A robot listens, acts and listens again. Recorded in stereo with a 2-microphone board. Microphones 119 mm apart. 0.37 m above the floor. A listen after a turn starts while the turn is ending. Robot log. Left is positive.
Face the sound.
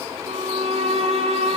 note: The violin: about 55° right or 125° right.
cmd yaw -55
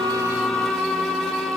end: Found it: a violin, straight ahead.